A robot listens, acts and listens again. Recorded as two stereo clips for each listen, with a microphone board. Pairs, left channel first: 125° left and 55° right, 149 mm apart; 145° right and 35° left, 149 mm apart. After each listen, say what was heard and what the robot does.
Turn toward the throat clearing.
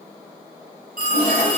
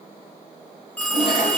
Keep listening.
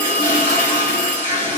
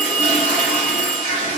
Keep listening.
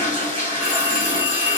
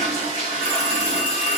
I can't make out throat clearing to turn to.